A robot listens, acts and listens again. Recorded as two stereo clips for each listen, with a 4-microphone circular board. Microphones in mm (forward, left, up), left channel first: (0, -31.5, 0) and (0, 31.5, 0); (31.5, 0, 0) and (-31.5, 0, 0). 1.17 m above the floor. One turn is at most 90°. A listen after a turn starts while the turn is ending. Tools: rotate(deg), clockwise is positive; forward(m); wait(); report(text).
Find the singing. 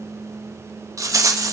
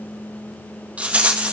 wait()
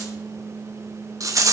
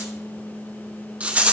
wait()
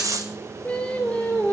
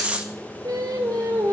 rotate(90)
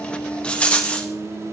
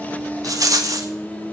rotate(75)
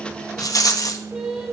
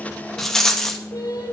report("Facing the singing.")